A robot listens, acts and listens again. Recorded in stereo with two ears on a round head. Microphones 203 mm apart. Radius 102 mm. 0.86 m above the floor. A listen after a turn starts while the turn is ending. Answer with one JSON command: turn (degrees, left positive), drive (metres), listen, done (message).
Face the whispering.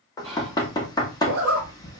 {"turn": -25}
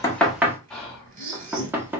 {"done": "Facing the whispering, 1 to 2 m away."}